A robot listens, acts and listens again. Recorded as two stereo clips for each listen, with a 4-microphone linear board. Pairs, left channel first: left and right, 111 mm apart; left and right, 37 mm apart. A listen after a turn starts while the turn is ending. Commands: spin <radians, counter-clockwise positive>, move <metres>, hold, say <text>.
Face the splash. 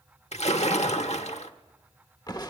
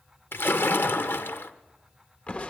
spin 1.57
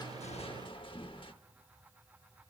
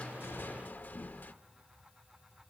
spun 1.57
say Facing where the splash came from. I can't hear it now.